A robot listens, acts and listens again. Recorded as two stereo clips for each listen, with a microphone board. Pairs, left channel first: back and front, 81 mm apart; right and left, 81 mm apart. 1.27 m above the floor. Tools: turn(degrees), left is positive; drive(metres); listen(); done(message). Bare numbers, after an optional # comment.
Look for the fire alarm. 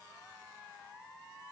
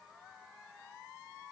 listen()
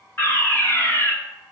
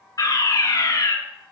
# The fire alarm: 125° right.
turn(-125)
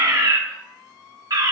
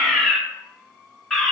done("Facing the fire alarm, 1 to 2 m away.")